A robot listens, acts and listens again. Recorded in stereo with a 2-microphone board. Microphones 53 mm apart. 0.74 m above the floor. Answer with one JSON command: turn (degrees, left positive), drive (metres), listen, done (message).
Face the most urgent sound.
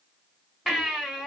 {"turn": 30}
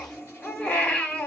{"turn": 150}
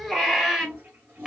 {"done": "Found it: a baby crying, straight ahead."}